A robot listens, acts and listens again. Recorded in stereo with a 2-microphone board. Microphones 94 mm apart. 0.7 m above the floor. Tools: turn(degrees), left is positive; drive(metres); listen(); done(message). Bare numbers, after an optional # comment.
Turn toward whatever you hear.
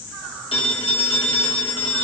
# The phone ringing: about 70° left or 110° left.
turn(70)
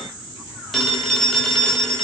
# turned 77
done("Facing the phone ringing.")